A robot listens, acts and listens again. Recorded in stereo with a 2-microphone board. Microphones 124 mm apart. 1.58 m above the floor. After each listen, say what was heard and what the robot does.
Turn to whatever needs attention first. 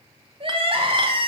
The crying: about 45° right or 135° right. Turn 45° right.
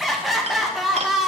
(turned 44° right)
Found it: crying, straight ahead, 1 to 2 m away.